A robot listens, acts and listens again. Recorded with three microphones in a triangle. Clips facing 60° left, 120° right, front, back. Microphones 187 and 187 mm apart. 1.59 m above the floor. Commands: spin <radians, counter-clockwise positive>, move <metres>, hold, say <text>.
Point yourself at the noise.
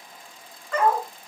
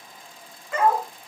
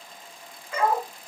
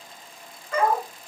spin 2.79
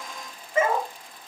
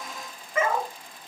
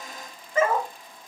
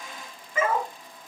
spin 0.26
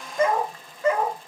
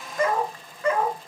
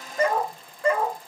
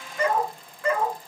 spin 0.35
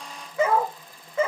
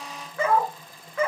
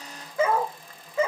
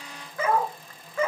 spin 0.79
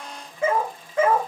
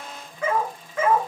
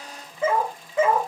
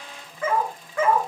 spin 0.87
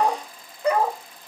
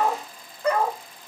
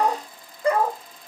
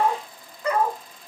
say Found it: a dog barking, straight ahead.